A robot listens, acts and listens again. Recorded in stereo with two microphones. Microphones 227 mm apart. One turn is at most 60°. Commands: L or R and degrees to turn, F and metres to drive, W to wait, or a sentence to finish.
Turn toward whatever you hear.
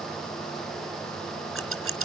R60
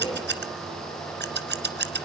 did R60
R50
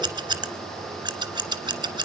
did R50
R20
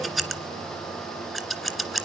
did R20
Facing the scissors.